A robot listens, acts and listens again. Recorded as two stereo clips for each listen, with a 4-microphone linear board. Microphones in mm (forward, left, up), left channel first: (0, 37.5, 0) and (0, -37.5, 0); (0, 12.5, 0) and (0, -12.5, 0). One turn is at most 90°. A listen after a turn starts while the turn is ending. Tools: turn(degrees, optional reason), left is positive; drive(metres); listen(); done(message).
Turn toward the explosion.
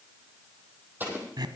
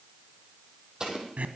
turn(degrees=-25, reason="The explosion: about 25° right or 155° right.")
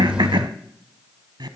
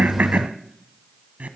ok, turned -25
listen()
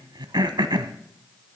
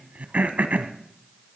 done("I heard an explosion, but can't make it out now. It was about straight ahead or 130° right.")